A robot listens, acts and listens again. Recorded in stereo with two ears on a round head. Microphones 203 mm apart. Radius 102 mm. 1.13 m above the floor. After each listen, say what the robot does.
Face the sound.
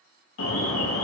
Turn 75° left.
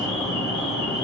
Turn 25° left.
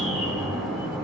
Facing the alarm.